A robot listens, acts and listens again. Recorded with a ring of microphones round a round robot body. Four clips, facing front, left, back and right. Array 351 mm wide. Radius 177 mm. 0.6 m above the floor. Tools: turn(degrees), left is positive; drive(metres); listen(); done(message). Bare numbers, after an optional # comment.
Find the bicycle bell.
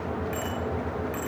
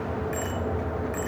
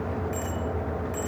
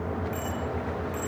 # The bicycle bell: 60° left.
turn(60)
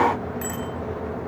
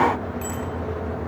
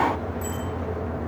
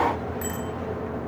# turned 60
# The bicycle bell is now 10° right.
turn(-10)
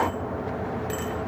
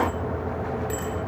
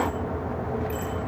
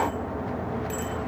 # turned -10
done("Facing the bicycle bell.")